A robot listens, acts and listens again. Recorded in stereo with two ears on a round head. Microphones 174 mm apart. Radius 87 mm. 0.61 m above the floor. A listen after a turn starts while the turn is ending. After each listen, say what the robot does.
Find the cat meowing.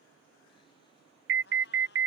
Turn 60° left.
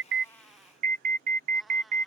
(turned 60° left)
Facing the cat meowing.